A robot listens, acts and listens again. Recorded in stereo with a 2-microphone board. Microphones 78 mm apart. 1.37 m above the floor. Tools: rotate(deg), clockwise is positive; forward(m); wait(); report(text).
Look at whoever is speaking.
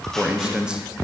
rotate(30)
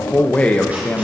rotate(-15)
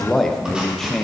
report("Facing the man speaking.")